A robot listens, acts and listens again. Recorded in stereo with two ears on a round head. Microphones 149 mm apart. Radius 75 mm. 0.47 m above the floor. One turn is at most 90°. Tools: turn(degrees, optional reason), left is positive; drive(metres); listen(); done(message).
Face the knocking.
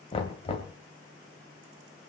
turn(degrees=30, reason="The knocking: about 30° left or 150° left.")
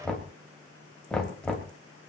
done("Facing the knocking.")